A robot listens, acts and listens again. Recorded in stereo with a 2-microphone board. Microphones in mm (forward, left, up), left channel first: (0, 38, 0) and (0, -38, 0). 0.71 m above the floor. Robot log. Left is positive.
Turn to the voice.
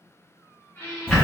cmd idle
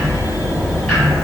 cmd idle
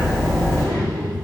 note: The child speaking: about 30° right or 150° right.
cmd yaw -30
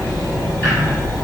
cmd idle
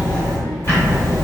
cmd idle
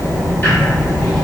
end: I heard a child speaking, but can't make it out now. It was about straight ahead or 120° right.